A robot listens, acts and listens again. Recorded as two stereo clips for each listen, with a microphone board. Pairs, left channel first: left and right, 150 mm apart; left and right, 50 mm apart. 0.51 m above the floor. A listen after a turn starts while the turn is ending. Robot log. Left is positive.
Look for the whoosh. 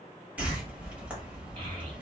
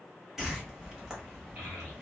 cmd yaw -30
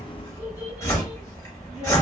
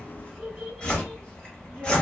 note: So it is at 20° left.
cmd yaw +20
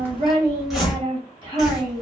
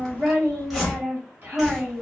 end: Found it: a whoosh, straight ahead, 1 to 2 m away.